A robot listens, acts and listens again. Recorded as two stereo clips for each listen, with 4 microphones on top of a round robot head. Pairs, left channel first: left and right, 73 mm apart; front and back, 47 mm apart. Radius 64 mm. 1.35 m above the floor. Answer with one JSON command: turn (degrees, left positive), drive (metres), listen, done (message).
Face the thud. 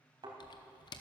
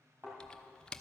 {"turn": -120}
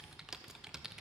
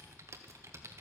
{"done": "Facing where the thud came from. I can't hear it now."}